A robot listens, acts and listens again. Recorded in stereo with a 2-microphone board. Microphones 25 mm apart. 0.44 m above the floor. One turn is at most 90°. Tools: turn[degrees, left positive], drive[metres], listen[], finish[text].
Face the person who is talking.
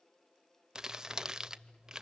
Action: listen[]
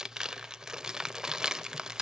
Action: listen[]
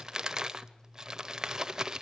Action: finish[I can't make out anyone speaking, only crumpling.]